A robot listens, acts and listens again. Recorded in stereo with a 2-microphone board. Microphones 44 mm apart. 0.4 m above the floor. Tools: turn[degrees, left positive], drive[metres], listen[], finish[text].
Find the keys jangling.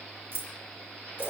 Thought: The keys jangling: about 55° right or 125° right.
Action: turn[-55]
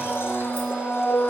Action: listen[]
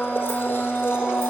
Action: listen[]
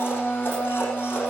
Action: finish[I heard keys jangling, but can't make it out now. It was about straight ahead or 70° right.]